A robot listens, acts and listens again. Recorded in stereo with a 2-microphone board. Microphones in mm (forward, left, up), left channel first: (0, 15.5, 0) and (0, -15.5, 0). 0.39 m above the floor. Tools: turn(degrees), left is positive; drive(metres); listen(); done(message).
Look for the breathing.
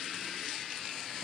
listen()
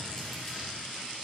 listen()
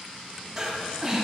turn(degrees=-15)
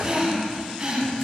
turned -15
turn(degrees=-150)
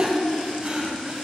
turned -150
turn(degrees=-40)
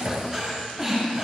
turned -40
turn(degrees=-20)
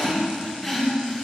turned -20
done("Facing the breathing.")